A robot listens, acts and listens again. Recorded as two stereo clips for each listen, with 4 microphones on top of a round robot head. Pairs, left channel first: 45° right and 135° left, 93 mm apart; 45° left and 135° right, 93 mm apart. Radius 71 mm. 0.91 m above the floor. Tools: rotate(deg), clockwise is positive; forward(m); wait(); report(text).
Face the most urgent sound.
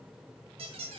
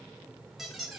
wait()
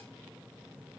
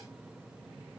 wait()
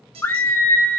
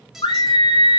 rotate(-20)
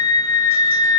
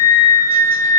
report("Found it: a scream, straight ahead, 2 to 4 m away.")